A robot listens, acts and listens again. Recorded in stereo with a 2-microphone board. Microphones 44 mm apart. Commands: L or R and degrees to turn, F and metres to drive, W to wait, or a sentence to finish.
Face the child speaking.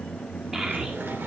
R15
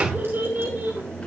R125
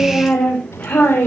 L45
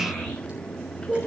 L15
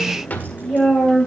Facing the child speaking, 2 to 4 m away.